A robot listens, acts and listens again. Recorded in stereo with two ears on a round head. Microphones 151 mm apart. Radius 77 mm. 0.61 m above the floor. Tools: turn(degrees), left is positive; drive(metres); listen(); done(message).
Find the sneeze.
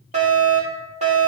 listen()
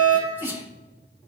turn(degrees=-30)
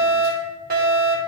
listen()
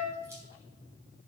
done("I heard a sneeze, but can't make it out now. It was about 15° left or 135° right.")